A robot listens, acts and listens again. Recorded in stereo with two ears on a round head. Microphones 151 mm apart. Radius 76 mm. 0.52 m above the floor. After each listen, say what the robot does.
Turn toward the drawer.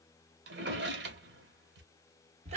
Turn 75° right.
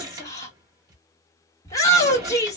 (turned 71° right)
Turn 25° right.
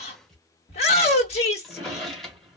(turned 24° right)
Facing the drawer.